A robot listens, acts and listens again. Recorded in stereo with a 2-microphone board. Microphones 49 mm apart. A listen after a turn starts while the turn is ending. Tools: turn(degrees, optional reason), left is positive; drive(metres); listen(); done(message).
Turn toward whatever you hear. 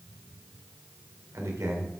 turn(degrees=-90)
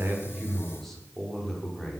turn(degrees=10, reason="So it is at 10° left.")
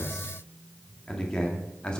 turn(degrees=20, reason="The man speaking is now 20° left.")
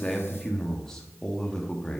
turn(degrees=10, reason="The man speaking is now 10° left.")
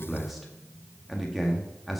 done("Found it: a man speaking, straight ahead, 1 to 2 m away.")